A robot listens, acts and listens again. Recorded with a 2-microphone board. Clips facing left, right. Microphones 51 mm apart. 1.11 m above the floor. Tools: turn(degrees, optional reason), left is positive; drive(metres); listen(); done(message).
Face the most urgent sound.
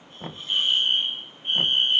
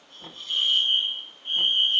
turn(degrees=60, reason="The fire alarm: about 60° left or 120° left.")
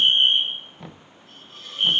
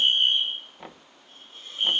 turn(degrees=40, reason="So it is at 40° left.")
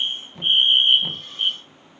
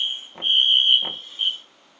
turn(degrees=15, reason="The fire alarm is now 15° left.")
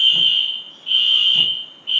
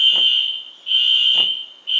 done("Found it: a fire alarm, straight ahead.")